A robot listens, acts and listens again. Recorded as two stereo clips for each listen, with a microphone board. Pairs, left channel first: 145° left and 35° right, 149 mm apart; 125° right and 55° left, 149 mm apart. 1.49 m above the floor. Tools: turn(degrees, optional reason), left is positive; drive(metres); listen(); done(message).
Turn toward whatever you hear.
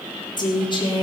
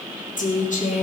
turn(degrees=-155, reason="The woman speaking: 155° right.")
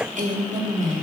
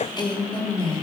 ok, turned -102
turn(degrees=-70, reason="The woman speaking is now 70° right.")
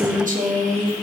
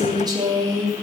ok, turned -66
turn(degrees=-10, reason="The woman speaking is now 10° right.")
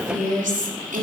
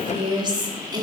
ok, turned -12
done("Found it: a woman speaking, straight ahead, 2 to 4 m away.")